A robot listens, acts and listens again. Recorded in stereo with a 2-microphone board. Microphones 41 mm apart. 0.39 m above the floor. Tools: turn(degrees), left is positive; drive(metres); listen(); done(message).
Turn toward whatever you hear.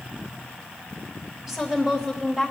turn(degrees=-30)
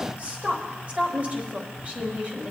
turn(degrees=-140)
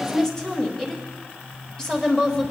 turn(degrees=20)
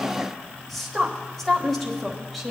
done("Found it: a woman speaking, straight ahead.")